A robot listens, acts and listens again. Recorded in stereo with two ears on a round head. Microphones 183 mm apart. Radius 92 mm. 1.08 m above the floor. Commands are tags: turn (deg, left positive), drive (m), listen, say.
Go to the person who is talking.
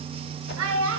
<turn deg="-70"/>
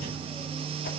<listen/>
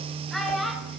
<drive m="1.0"/>
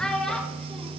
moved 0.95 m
<drive m="1.0"/>
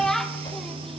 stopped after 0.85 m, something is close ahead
<say>I am next to the child speaking.</say>